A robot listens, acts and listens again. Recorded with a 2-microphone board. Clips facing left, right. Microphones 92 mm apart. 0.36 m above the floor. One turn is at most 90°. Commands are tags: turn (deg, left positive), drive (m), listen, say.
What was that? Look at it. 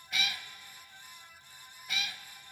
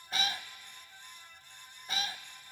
<turn deg="-35"/>
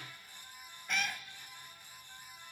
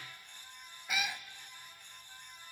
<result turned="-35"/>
<turn deg="-10"/>
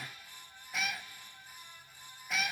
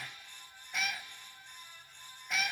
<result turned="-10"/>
<say>Found it: a cat meowing, straight ahead, under 1 m away.</say>